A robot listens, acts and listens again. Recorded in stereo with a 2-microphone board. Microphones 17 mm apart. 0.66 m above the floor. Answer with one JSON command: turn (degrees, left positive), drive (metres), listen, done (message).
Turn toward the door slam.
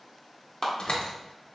{"turn": 60}
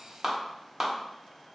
{"listen": true}
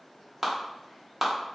{"done": "I heard a door slam, but can't make it out now. It was about straight ahead or 60° left."}